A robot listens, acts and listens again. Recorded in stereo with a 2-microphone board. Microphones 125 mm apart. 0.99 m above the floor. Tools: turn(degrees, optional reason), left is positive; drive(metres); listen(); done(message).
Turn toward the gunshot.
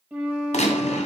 turn(degrees=65, reason="The gunshot: about 65° left or 115° left.")
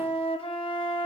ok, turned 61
listen()
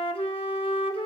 done("I heard a gunshot, but can't make it out now. It was about 5° left or 55° left.")